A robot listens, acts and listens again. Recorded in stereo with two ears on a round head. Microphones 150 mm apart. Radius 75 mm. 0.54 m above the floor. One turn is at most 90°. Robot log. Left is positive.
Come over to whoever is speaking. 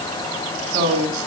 note: The man speaking: about 30° right or 150° right.
cmd yaw -30
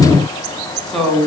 cmd fwd 1.0
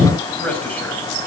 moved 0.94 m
note: The man speaking is now 10° left.
cmd yaw +10
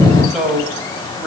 cmd fwd 1.0
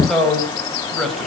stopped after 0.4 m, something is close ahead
end: Blocked. The man speaking is further on, straight ahead.